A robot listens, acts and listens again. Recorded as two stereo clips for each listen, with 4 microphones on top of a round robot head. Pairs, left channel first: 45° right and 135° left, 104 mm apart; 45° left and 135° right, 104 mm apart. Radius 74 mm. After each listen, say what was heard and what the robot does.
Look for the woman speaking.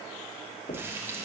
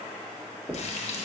Keep listening.
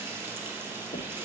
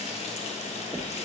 Keep listening.
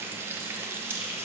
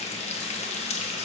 I can't make out a woman speaking, only frying and knocking.